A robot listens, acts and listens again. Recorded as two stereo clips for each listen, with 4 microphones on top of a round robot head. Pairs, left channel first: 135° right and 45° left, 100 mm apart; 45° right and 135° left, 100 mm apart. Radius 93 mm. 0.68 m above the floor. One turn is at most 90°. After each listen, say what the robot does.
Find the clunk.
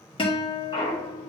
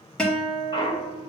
Turn 90° right.
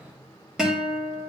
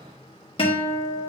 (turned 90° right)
Facing where the clunk came from. I can't hear it now.